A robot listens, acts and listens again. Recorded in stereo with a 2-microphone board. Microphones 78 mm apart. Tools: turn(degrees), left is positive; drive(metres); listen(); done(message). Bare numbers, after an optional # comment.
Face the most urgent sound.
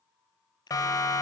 # The siren: about 55° left or 125° left.
turn(55)
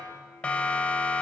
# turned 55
# So it is at 20° left.
turn(20)
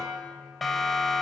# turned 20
done("Facing the siren, 2 to 4 m away.")